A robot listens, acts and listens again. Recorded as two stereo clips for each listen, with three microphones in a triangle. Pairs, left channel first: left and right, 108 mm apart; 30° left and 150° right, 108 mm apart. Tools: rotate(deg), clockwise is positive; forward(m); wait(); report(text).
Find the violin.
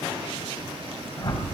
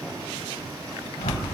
wait()
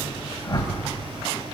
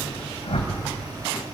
wait()
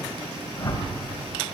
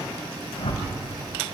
report("I can't make out a violin to turn to.")